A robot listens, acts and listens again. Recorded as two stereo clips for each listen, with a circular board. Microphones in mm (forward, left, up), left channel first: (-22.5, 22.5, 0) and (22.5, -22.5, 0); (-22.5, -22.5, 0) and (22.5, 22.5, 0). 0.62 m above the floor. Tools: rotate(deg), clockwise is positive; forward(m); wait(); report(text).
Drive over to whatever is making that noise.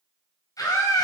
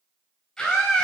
rotate(-140)
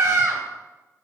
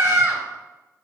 rotate(10)
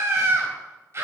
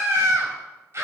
forward(1.0)
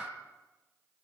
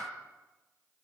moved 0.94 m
wait()
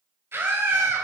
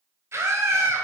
forward(1.0)
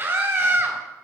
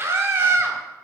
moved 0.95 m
forward(1.0)
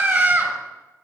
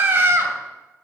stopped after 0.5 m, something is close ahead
report("Arrived at the scream, straight ahead.")